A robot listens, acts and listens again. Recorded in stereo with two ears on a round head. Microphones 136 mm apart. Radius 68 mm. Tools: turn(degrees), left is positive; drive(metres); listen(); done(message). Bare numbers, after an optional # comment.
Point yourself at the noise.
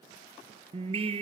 # The singing: about 40° right or 140° right.
turn(-40)
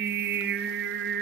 # So it is at 100° right.
turn(-100)
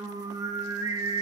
# The singing is now 20° right.
turn(-20)
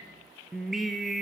done("Found it: singing, straight ahead, 1 to 2 m away.")